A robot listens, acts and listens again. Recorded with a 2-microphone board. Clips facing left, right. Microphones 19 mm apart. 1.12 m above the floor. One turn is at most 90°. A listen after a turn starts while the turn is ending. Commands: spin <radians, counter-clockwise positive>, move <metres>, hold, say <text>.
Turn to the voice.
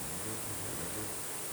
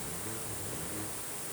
hold
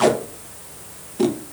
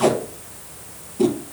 hold
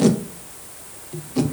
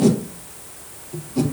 say I can't make out anyone speaking to turn to.